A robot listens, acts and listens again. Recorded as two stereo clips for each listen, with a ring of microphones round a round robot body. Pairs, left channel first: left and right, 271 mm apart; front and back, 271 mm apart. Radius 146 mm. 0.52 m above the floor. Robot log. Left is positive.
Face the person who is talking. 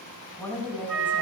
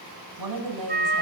note: The woman speaking: 175° left.
cmd yaw +175
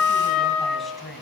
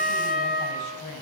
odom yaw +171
end: Found it: a woman speaking, straight ahead, 2 to 4 m away.